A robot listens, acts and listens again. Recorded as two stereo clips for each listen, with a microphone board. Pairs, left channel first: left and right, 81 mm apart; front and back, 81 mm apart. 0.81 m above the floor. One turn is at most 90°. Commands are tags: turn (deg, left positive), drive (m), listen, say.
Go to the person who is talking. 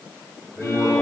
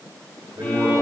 <turn deg="90"/>
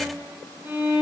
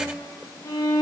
<turn deg="60"/>
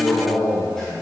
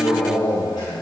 <drive m="1.0"/>
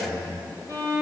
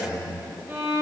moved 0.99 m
<turn deg="10"/>
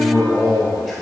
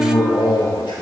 <drive m="1.0"/>
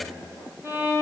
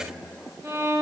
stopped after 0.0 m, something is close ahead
<listen/>
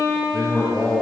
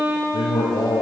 <say>I am next to the man speaking.</say>